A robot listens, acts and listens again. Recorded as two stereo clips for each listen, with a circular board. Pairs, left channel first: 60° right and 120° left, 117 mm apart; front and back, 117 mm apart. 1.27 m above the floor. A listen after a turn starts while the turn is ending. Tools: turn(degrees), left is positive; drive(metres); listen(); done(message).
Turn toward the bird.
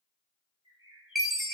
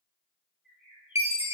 turn(degrees=-100)
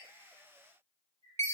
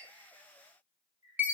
turn(degrees=-30)
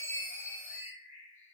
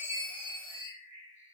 done("Facing the bird.")